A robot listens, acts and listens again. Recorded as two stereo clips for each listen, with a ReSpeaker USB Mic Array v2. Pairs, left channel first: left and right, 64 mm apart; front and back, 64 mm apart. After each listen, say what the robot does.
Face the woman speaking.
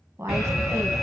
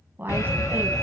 Turn 125° right.
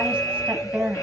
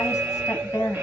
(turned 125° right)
Turn 30° right.
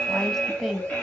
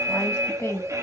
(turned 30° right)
Facing the woman speaking, 1 to 2 m away.